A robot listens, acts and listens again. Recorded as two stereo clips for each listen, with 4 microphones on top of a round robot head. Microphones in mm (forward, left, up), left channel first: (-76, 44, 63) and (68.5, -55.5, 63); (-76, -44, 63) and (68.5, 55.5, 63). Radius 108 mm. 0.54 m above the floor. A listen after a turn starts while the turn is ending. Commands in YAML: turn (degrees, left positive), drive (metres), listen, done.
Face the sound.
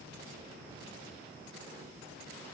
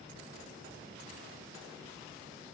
listen: true
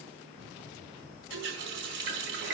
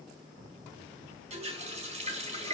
turn: -20
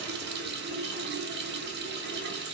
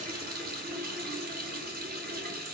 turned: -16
done: "Found it: a running tap, straight ahead, 2 to 4 m away."